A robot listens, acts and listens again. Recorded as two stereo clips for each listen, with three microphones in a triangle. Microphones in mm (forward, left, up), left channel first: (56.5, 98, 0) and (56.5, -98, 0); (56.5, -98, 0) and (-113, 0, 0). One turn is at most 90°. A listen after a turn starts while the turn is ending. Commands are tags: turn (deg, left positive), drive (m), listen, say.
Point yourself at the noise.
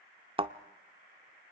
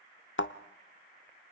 <turn deg="-25"/>
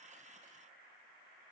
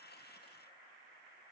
<say>I heard a thud from this way, but can't make it out now.</say>